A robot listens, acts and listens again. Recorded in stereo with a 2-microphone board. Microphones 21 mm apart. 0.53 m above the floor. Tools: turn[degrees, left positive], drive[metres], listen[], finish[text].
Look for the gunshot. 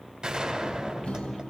Thought: The gunshot: about 45° right or 135° right.
Action: turn[-45]
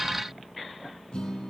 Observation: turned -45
Action: listen[]
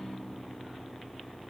Action: finish[I heard a gunshot, but can't make it out now. It was about straight ahead or 90° right.]